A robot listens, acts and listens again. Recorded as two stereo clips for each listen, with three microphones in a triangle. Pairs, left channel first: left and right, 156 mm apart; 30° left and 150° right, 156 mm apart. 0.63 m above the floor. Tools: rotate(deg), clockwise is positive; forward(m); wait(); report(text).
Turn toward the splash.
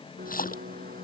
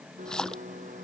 rotate(-115)
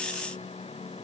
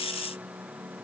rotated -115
report("Facing where the splash came from. I can't hear it now.")